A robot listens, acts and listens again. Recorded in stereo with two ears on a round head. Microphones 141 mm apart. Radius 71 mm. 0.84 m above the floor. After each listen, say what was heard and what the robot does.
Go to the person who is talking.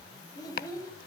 The child speaking: about 25° left or 155° left. Turn 25° left.
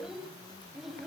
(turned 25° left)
Drive 1.0 m forward.
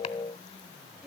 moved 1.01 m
Drive 1.0 m forward.
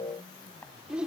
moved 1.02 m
Drive 1.0 m forward.
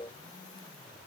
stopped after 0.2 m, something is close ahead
Keep listening.
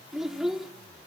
Arrived at the child speaking, straight ahead.